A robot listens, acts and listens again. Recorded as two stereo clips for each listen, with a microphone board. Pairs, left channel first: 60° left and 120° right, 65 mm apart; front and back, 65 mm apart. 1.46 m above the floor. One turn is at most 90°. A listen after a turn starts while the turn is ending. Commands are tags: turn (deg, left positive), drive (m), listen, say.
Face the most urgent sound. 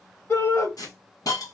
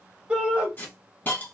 <turn deg="90"/>
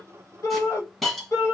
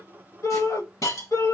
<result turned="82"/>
<turn deg="25"/>
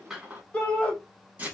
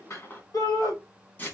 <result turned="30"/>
<turn deg="-10"/>
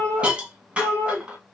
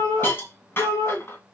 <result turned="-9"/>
<say>Facing the shout, 1 to 2 m away.</say>